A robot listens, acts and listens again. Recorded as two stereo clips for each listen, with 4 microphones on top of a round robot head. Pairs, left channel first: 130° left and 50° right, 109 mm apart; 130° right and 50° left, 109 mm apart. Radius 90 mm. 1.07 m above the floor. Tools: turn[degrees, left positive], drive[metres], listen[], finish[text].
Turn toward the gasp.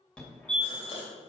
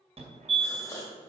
Thought: The gasp: 165° left.
Action: turn[165]
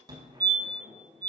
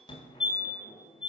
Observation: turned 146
Thought: Nothing new. It was at 15° left.
Action: turn[15]
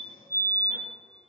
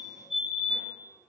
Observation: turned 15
Action: finish[I heard a gasp from this way, but can't make it out now.]